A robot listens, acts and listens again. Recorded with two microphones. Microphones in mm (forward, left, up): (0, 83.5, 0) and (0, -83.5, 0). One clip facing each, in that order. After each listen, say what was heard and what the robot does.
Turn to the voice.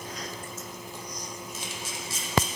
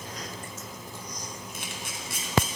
Keep listening.
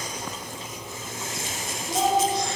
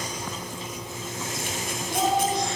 The child speaking: about 25° left or 155° left. Turn 25° left.
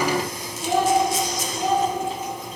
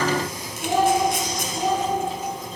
Found it: a child speaking, straight ahead.